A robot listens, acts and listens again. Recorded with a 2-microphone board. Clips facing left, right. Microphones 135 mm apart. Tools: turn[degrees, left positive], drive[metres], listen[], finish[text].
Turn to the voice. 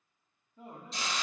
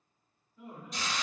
Thought: The man speaking: about 35° left or 145° left.
Action: turn[35]
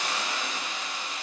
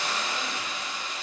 Action: listen[]
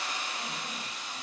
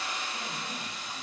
Action: listen[]
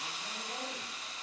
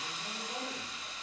Action: finish[I heard a man speaking, but can't make it out now. It was about straight ahead or 110° left.]